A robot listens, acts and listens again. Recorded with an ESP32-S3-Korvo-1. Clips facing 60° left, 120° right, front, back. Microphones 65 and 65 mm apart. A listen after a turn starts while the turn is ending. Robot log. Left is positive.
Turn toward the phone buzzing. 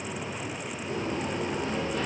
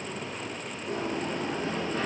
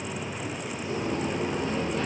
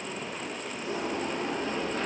cmd idle
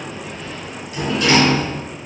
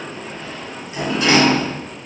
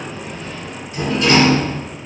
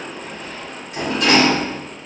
cmd idle
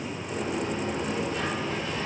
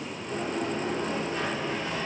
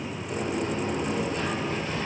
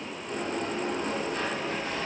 end: I can't make out a phone buzzing, only a sliding door.